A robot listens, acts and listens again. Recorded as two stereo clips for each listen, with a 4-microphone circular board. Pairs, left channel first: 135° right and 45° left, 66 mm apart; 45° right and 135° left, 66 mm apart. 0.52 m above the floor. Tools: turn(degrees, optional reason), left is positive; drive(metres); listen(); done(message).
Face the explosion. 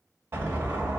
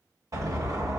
turn(degrees=100, reason="The explosion: 100° left.")
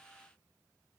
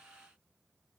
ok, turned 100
done("Facing where the explosion came from. I can't hear it now.")